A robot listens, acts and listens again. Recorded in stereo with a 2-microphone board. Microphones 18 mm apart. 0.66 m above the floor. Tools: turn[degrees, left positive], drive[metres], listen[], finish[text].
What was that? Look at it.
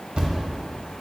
Thought: The thud: about 75° right or 105° right.
Action: turn[-75]
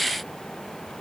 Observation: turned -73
Action: listen[]
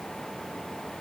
Action: finish[I heard a thud, but can't make it out now. It was about straight ahead or 35° right.]